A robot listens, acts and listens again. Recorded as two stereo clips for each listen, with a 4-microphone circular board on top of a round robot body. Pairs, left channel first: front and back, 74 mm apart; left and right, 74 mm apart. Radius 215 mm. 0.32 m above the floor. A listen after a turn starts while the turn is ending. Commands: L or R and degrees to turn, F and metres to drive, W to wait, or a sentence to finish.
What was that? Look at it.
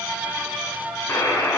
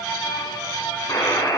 L65
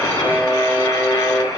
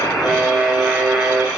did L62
Found it: a buzzer, straight ahead, over 4 m away.